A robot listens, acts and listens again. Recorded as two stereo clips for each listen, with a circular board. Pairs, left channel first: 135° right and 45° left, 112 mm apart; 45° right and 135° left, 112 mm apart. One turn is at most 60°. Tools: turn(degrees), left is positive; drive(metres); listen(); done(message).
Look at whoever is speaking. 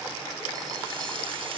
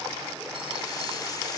listen()
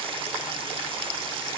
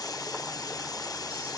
listen()
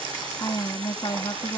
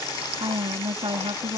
turn(degrees=60)
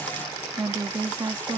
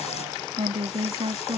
turn(degrees=60)
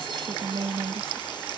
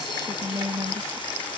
turn(degrees=60)
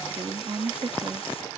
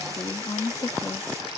done("Facing the woman speaking.")